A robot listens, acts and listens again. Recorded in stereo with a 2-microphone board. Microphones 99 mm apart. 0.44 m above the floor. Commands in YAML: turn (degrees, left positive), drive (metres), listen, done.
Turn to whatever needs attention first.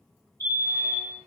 turn: 25
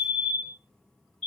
turn: 10
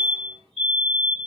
done: "Facing the fire alarm, 2 to 4 m away."